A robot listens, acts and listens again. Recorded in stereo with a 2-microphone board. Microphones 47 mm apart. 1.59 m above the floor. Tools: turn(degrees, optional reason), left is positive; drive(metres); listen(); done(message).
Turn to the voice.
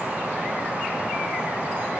listen()
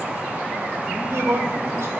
turn(degrees=-65, reason="The man speaking: about 65° right or 115° right.")
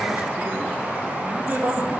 turn(degrees=-40, reason="So it is at 40° right.")
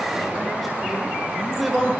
done("Facing the man speaking, 1 to 2 m away.")